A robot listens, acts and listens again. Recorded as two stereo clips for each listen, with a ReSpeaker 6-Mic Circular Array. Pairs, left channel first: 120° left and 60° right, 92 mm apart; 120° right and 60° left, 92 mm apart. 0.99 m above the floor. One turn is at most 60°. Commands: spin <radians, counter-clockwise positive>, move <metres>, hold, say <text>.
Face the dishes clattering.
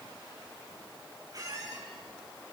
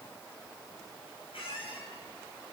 hold
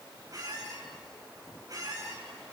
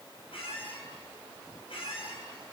hold
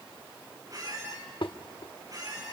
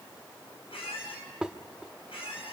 spin 1.05
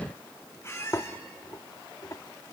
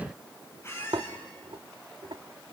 spin 1.05
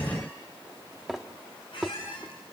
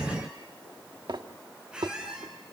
spin 0.52
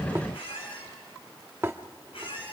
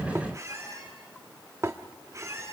say Found it: dishes clattering, straight ahead, 1 to 2 m away.